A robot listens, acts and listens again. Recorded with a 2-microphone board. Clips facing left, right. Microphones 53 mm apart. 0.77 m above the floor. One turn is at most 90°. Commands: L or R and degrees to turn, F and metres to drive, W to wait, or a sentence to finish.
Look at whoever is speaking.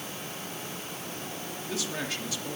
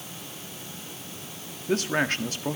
R50
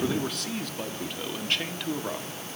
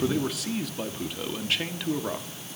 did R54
Facing the man speaking, 1 to 2 m away.